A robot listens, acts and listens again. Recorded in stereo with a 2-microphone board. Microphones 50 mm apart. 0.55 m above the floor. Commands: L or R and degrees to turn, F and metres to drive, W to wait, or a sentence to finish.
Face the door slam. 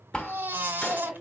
L15
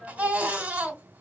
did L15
W
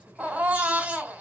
I heard a door slam, but can't make it out now. It was about straight ahead or 150° left.